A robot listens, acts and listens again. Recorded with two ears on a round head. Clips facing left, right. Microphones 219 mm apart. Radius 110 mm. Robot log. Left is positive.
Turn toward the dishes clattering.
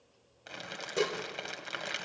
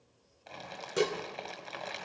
note: The dishes clattering: about 20° right or 160° right.
cmd yaw -20
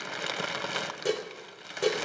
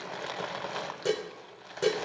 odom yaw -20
end: Found it: dishes clattering, straight ahead, 1 to 2 m away.